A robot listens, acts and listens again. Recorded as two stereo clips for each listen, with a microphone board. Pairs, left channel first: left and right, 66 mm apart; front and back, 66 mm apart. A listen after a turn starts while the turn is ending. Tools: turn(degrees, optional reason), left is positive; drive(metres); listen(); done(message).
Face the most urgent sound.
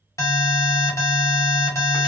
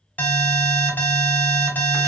turn(degrees=65, reason="The alarm: 65° left.")
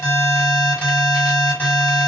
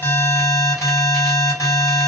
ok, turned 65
turn(degrees=25, reason="The alarm is now 25° left.")
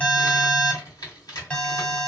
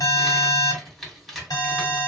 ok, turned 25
turn(degrees=20, reason="The alarm is now 20° left.")
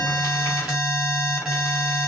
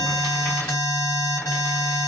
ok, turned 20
done("Found it: an alarm, straight ahead, 1 to 2 m away.")